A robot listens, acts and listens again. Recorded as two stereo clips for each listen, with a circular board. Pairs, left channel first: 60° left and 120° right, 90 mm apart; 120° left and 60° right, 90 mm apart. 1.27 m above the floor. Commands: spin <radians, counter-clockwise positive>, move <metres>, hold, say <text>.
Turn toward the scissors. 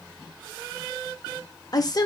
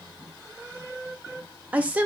hold
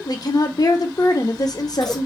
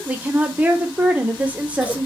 spin 2.62
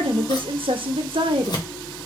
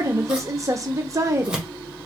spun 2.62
spin 0.35
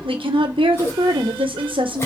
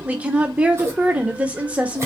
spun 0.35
say Found it: scissors, straight ahead, 1 to 2 m away.